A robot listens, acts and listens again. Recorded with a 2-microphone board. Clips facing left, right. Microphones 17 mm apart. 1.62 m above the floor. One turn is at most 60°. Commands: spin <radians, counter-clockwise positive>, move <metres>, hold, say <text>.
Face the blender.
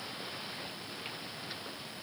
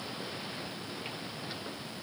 hold
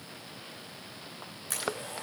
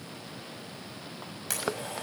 spin -1.05
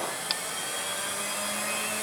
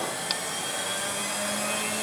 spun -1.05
spin -0.52
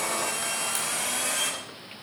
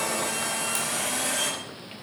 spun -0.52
say Found it: a blender, straight ahead, over 4 m away.